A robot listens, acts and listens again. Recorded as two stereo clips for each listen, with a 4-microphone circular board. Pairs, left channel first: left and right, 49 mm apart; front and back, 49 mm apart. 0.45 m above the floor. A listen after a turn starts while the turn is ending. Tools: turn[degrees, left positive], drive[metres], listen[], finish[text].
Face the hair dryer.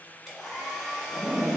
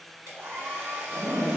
Thought: The hair dryer: straight behind.
Action: turn[180]
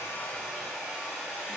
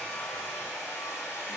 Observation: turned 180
Thought: The hair dryer is now 15° right.
Action: turn[-15]
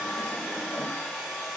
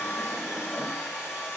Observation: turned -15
Action: finish[Found it: a hair dryer, straight ahead, 1 to 2 m away.]